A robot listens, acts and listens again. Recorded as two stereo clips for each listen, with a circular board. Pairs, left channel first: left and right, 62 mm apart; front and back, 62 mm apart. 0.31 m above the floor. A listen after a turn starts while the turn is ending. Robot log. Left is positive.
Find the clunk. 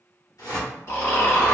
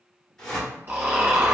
cmd idle
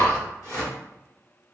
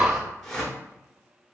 cmd idle
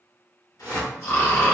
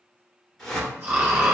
end: I can't make out a clunk to turn to.